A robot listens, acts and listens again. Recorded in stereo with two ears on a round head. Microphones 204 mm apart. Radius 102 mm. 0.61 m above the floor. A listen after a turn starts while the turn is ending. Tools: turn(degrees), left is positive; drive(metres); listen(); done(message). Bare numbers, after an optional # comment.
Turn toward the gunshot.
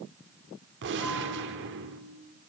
# The gunshot: about 50° right or 130° right.
turn(-50)
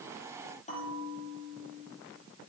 listen()
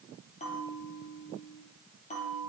done("I heard a gunshot, but can't make it out now. It was about straight ahead or 80° right.")